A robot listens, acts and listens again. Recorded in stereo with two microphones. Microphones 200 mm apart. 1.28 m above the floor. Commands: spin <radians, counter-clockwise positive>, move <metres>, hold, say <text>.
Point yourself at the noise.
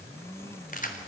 spin 0.70
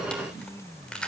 say Facing the keys jangling, 2 to 4 m away.